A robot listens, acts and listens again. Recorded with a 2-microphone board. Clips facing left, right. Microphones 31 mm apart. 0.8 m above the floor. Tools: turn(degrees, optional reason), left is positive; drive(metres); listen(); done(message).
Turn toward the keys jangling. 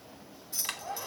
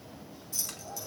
turn(degrees=20, reason="The keys jangling: about 20° left or 160° left.")
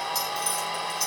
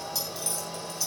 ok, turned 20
listen()
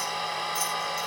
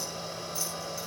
listen()
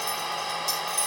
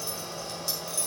done("I heard keys jangling, but can't make it out now. It was about straight ahead or 140° left.")